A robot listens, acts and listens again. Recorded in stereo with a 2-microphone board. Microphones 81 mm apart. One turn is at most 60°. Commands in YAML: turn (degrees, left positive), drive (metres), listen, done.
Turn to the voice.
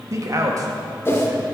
turn: -40
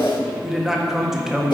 done: "Facing the man speaking."